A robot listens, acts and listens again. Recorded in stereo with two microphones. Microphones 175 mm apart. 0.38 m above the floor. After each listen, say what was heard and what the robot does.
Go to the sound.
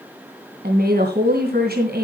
The woman speaking: about 65° right or 115° right. Turn 65° right.
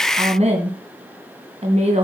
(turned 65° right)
So it is at 40° right. Turn 40° right.
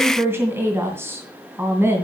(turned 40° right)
The woman speaking is now 15° right. Turn 15° right.
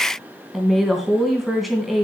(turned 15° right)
Drive 1.0 m forward.
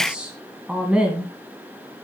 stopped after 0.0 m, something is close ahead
Something is in my way. I am facing the woman speaking but have not reached it.